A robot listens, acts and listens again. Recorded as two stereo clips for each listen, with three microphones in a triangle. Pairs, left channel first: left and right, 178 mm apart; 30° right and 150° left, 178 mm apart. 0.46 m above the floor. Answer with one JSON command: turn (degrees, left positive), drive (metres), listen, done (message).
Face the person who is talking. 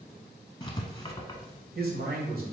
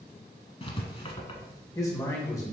{"turn": -100}
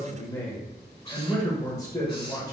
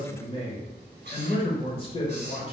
{"turn": 20}
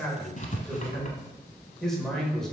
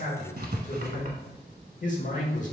{"done": "Found it: a man speaking, straight ahead."}